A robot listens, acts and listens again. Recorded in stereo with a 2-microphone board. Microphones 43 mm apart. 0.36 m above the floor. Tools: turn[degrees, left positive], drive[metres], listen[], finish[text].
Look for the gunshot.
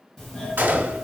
Thought: The gunshot: about 55° right or 125° right.
Action: turn[-55]
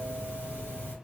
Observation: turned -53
Action: listen[]
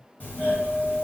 Action: finish[I heard a gunshot, but can't make it out now. It was about 5° right or 70° right.]